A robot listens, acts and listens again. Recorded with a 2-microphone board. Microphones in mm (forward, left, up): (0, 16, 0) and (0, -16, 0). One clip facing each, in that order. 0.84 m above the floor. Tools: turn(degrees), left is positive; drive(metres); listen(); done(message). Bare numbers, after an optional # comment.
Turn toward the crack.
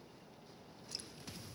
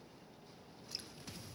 listen()
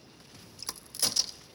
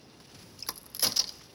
turn(-30)
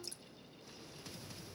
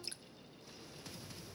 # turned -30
listen()
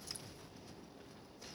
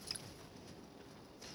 done("I heard a crack, but can't make it out now. It was about 20° left or 140° right.")